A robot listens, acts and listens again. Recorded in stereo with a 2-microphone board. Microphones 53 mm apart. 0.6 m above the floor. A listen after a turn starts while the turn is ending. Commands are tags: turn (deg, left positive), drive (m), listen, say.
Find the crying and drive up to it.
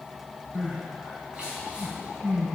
<turn deg="-15"/>
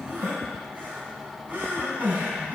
<turn deg="-145"/>
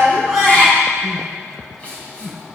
<turn deg="20"/>
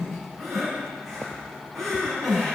<drive m="1.0"/>
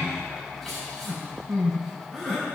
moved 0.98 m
<drive m="1.0"/>
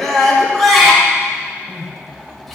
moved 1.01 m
<drive m="1.0"/>
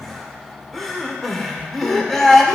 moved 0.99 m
<drive m="1.0"/>
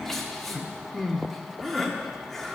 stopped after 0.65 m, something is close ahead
<turn deg="10"/>
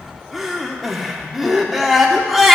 <say>Arrived at the crying, straight ahead.</say>